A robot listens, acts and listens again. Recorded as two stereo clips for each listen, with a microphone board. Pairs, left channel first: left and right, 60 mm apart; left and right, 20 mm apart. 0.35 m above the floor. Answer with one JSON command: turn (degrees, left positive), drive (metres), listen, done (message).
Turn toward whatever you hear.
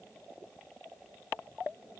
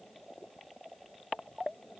{"listen": true}
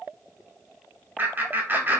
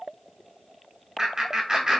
{"turn": -40}
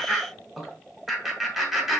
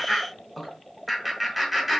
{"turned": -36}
{"done": "Found it: laughter, straight ahead, 1 to 2 m away."}